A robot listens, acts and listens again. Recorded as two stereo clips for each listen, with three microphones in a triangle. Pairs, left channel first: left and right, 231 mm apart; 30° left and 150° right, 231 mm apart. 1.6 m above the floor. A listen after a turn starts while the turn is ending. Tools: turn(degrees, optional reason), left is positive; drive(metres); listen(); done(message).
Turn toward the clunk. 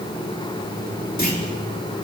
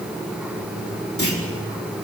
turn(degrees=40, reason="The clunk: 40° left.")
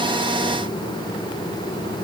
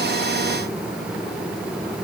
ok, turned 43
done("Facing where the clunk came from. I can't hear it now.")